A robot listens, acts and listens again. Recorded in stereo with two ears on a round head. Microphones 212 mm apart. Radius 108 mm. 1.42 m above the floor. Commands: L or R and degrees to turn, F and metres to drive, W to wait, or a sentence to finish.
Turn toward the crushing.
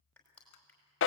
L30
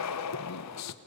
W
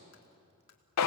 W
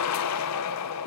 I heard crushing, but can't make it out now. It was about 25° right or 145° left.